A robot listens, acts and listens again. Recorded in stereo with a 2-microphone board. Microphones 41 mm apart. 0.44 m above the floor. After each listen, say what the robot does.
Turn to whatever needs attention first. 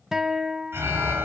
Turn 90° right.
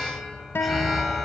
Found it: an alarm, straight ahead, over 4 m away.